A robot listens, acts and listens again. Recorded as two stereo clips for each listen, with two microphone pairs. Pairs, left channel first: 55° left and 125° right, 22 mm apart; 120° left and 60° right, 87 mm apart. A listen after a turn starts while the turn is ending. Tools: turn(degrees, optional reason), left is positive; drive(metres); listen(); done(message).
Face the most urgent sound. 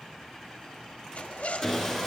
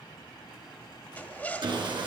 listen()
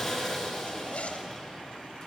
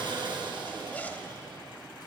listen()
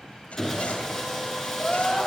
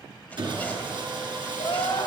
turn(degrees=125, reason="The crying: 125° left.")
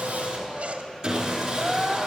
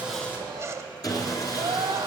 turn(degrees=-40, reason="The crying is now 40° right.")
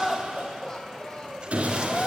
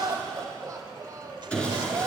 done("Facing the crying.")